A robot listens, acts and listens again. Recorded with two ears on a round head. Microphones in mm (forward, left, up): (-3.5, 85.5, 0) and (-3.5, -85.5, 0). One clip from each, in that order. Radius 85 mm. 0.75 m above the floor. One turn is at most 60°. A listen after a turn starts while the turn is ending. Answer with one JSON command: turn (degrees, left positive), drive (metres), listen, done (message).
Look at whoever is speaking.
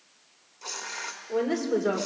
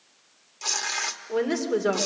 {"turn": -25}
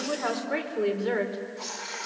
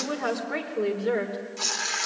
{"turn": 15}
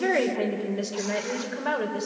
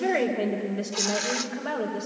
{"turn": 30}
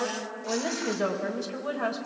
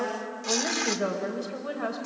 {"turn": 15}
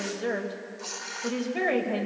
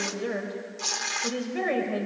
{"done": "Found it: a woman speaking, straight ahead, over 4 m away."}